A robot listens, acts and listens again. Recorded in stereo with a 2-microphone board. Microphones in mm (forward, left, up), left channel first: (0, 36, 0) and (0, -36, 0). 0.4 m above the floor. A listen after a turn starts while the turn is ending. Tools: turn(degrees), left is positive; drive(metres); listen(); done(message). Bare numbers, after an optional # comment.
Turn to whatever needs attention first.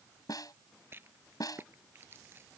listen()
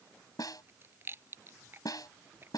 listen()
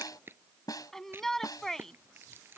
turn(30)
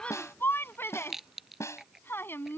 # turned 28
# So it is at 145° left.
turn(145)
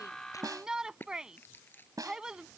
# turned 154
# The shout is now 10° right.
turn(-10)
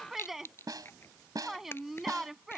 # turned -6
done("Facing the shout.")